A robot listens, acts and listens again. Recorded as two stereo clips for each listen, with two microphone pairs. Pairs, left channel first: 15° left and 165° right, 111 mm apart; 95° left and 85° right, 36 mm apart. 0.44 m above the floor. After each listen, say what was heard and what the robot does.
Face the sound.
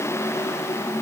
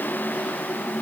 Keep listening.
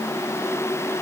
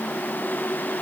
Keep listening.
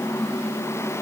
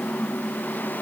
I can't make out anything.